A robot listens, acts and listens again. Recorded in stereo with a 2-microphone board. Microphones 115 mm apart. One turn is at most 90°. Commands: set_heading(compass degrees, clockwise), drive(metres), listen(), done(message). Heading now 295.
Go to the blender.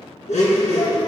set_heading(205)
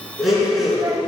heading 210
drive(1.0)
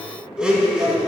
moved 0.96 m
set_heading(220)
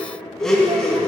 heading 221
drive(1.0)
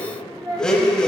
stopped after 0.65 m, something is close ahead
done("I am next to the blender.")